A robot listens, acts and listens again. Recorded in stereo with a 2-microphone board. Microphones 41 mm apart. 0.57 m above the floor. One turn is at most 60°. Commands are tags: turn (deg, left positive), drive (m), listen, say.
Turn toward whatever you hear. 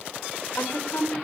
<turn deg="60"/>
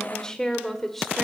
<turn deg="10"/>
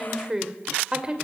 <turn deg="-20"/>
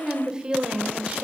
<turn deg="-25"/>
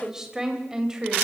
<turn deg="-15"/>
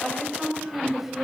<say>Found it: a woman speaking, straight ahead.</say>